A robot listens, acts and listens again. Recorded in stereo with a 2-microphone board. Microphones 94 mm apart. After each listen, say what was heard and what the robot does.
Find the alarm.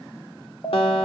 The alarm: about 30° left or 150° left. Turn 30° left.
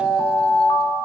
So it is at 120° left. Turn 120° left.
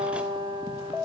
The alarm is now 20° left. Turn 20° left.
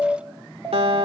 Found it: an alarm, straight ahead.